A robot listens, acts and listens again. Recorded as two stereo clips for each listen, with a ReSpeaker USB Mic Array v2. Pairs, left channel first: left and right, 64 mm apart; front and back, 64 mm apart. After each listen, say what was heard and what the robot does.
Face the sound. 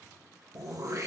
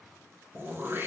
The throat clearing: 125° right. Turn 125° right.
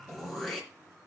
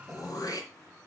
Facing the throat clearing, 2 to 4 m away.